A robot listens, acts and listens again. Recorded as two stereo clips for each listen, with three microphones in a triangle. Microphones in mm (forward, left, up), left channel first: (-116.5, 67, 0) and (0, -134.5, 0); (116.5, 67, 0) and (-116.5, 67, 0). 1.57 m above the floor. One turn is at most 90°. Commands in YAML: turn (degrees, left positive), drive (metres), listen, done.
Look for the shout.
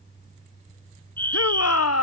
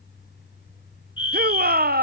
turn: 90
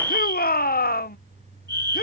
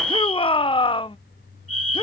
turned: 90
turn: 70
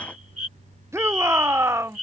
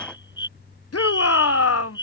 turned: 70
turn: 20
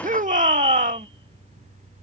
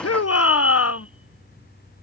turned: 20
done: "Facing the shout."